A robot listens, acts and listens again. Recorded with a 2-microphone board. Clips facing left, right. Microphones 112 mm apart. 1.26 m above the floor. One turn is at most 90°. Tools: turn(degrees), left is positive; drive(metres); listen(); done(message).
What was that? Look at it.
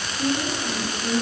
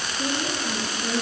turn(degrees=-25)
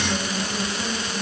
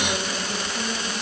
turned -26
listen()
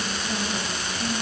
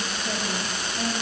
listen()
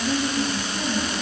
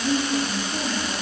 turn(degrees=-90)
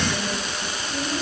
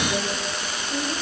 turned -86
turn(degrees=-25)
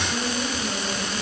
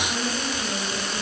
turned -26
done("Found it: a woman speaking, straight ahead.")